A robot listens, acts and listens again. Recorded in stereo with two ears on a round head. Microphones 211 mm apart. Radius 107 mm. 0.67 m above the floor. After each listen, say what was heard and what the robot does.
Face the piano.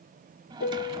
The piano: about 45° left or 135° left. Turn 45° left.
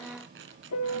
So it is at 85° left. Turn 85° left.
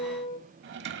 The piano is now 25° left. Turn 25° left.
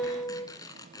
The piano is now 10° left. Turn 10° left.
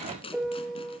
Facing the piano.